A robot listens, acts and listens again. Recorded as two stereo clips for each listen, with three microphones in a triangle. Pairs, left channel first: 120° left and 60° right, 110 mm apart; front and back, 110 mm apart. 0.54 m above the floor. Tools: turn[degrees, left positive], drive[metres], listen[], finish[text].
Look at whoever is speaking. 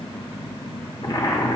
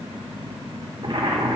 Action: listen[]
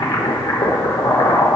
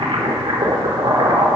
Action: listen[]
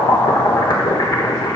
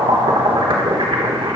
Action: finish[I can't make out anyone speaking, only boiling.]